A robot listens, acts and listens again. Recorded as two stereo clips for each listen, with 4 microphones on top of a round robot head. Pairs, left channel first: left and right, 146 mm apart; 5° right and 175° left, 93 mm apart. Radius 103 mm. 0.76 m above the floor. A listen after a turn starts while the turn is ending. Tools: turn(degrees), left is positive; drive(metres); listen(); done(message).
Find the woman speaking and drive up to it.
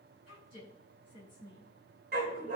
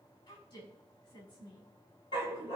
turn(degrees=30)
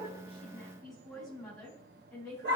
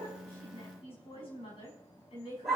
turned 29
drive(metres=1.0)
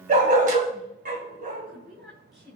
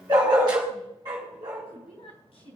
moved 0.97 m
drive(metres=1.0)
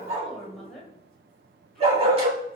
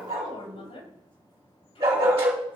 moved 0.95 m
drive(metres=1.0)
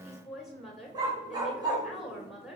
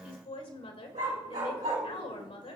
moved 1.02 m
drive(metres=1.0)
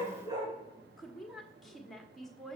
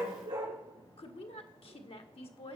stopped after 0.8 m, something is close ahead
done("I am next to the woman speaking.")